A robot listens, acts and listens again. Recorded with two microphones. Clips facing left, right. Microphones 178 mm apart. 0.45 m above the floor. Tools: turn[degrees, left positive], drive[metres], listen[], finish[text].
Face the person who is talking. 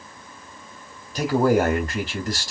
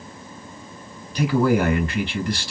Thought: The man speaking: about 45° left or 135° left.
Action: turn[45]
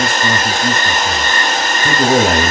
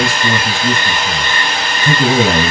Thought: So it is at 80° left.
Action: turn[80]
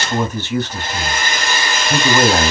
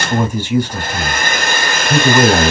Thought: The man speaking is now 15° right.
Action: turn[-15]
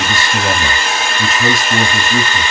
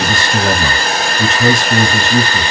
Action: finish[Facing the man speaking.]